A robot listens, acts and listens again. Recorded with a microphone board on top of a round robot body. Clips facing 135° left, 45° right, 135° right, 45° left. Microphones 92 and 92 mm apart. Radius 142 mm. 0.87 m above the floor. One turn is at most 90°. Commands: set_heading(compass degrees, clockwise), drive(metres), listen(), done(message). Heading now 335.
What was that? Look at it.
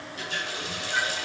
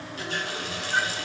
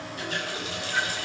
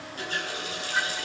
done("Found it: a running tap, straight ahead.")